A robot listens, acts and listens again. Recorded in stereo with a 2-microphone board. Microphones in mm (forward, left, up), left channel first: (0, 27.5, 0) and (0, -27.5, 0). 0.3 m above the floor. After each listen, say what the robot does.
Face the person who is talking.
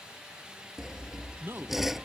Turn 45° right.
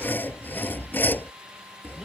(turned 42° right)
Keep listening.
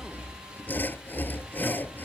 Keep listening.
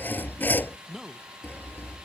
Turn 15° right.
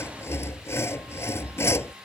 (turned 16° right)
Keep listening.
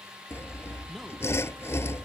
Keep listening.
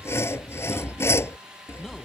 Facing where the man speaking came from. I can't hear it now.